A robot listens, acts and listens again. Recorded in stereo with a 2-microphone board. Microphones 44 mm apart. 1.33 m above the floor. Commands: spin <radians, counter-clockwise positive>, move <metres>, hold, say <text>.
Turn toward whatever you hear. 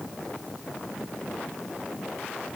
hold
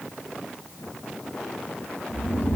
spin 0.87
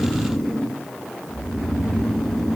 say Found it: snoring, straight ahead, 1 to 2 m away.